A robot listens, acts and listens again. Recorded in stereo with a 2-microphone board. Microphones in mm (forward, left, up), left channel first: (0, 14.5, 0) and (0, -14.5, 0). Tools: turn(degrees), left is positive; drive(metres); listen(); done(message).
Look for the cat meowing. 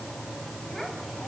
listen()
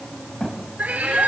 turn(degrees=-90)
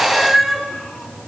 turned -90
done("Facing the cat meowing, over 4 m away.")